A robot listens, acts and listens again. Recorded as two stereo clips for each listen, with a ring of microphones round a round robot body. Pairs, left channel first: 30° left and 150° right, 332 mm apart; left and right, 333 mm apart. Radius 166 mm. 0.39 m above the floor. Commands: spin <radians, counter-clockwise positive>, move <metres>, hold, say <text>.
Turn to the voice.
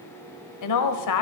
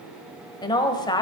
spin 0.26
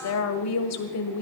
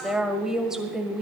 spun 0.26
say Facing the woman speaking, 1 to 2 m away.